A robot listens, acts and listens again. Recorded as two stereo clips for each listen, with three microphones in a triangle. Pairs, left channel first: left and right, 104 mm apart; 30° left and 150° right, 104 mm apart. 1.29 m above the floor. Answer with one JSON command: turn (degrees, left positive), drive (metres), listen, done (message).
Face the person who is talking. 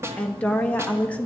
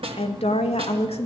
{"turn": 15}
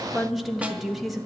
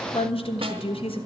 {"done": "Found it: a woman speaking, straight ahead, 1 to 2 m away."}